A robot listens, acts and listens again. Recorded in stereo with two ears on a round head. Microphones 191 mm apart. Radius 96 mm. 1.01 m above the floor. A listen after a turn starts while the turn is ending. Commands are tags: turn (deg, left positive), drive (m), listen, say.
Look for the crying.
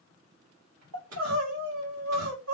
<turn deg="-70"/>
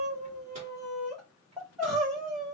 <say>Found it: crying, straight ahead.</say>